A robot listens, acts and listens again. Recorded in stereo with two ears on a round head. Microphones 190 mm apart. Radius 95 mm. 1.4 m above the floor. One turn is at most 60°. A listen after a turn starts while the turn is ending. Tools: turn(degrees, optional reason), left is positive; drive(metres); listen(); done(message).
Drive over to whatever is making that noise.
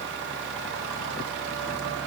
listen()
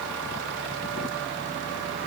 listen()
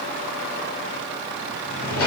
turn(degrees=60, reason="The drawer: about 65° left or 115° left.")
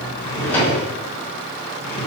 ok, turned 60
turn(degrees=10, reason="So it is at 10° left.")
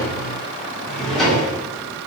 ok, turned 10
drive(metres=1.0)
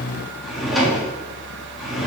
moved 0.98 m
drive(metres=1.0)
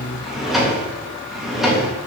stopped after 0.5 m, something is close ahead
done("Arrived at the drawer, straight ahead.")